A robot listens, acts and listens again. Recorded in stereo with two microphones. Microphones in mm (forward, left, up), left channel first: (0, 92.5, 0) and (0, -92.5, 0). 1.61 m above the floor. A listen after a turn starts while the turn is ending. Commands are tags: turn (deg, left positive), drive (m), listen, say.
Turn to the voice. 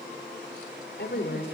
<turn deg="55"/>
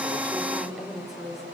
<say>Facing the woman speaking, over 4 m away.</say>